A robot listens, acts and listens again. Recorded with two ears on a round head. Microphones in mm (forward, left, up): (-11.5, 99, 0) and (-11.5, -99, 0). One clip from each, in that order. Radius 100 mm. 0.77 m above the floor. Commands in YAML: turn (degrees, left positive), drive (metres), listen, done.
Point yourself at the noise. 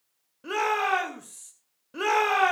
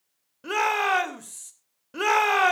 turn: -25
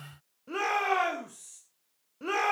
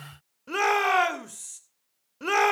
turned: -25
turn: -130
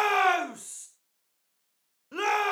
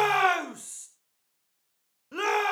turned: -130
done: "Facing the shout, 2 to 4 m away."